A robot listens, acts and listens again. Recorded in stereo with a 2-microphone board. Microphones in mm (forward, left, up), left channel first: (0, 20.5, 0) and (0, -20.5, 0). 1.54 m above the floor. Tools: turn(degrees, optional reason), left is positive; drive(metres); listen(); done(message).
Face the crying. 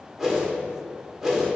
listen()
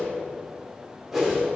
listen()
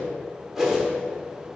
done("I can't make out crying, only a whoosh.")